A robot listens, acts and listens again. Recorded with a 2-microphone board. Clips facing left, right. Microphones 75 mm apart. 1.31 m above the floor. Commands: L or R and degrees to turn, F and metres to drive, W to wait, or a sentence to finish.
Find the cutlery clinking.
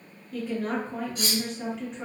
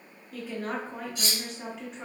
L50
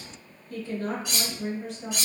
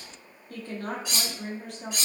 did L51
Found it: cutlery clinking, straight ahead.